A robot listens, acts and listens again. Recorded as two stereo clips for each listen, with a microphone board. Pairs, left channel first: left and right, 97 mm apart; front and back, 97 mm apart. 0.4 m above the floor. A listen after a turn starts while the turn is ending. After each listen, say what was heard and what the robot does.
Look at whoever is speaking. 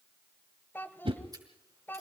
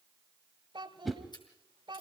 The child speaking: 155° left. Turn 155° left.
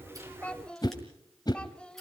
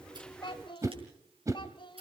The child speaking is now 10° left. Turn 10° left.
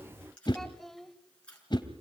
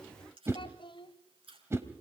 Found it: a child speaking, straight ahead, 1 to 2 m away.